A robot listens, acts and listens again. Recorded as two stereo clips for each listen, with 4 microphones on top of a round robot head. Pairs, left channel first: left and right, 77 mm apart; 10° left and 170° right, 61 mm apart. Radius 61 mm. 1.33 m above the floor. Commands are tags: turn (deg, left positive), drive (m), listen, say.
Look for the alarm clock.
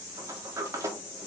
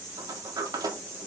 <listen/>
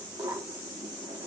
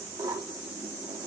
<listen/>
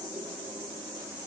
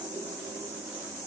<say>I can't make out an alarm clock to turn to.</say>